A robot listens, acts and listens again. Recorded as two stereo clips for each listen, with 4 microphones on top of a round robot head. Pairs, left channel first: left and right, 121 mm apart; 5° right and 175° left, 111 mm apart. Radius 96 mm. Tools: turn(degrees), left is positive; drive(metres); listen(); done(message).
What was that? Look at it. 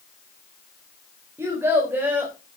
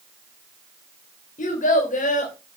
turn(degrees=-10)
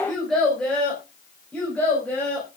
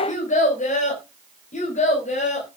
turn(degrees=10)
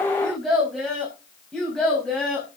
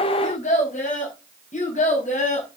done("Facing the child speaking.")